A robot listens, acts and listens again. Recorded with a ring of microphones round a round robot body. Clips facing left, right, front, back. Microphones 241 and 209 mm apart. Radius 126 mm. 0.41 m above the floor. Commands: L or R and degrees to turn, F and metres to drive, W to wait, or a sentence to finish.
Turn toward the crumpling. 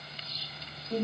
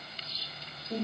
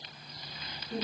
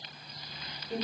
W
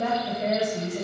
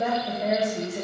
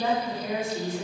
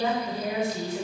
W
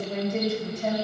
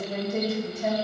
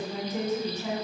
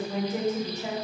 I can't make out crumpling to turn to.